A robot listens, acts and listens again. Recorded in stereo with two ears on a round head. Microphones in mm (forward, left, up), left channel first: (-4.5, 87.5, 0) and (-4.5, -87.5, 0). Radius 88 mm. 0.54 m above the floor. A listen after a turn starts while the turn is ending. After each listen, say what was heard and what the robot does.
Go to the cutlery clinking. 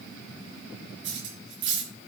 The cutlery clinking: about 65° right or 115° right. Turn 65° right.
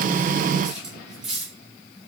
Drive 1.0 m forward.
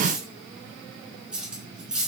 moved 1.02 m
Drive 1.0 m forward.
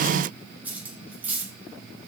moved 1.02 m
The cutlery clinking is now 10° right. Turn 10° right.
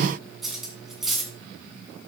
Drive 1.0 m forward.
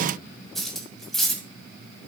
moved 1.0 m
Drive 1.0 m forward.
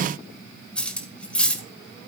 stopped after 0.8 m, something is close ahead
I am next to the cutlery clinking.